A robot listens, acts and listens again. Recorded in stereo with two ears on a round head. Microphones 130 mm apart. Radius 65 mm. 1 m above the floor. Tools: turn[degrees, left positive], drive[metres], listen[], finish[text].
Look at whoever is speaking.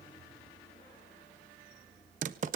Action: listen[]
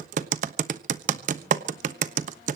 Action: listen[]
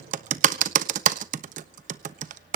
Action: finish[I can't make out anyone speaking to turn to.]